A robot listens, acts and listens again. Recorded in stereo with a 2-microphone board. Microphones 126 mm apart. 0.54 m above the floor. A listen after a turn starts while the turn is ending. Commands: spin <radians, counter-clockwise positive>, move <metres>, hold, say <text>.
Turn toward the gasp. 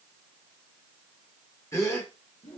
spin 0.44
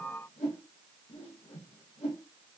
hold
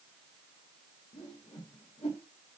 say I heard a gasp, but can't make it out now. It was about straight ahead or 130° left.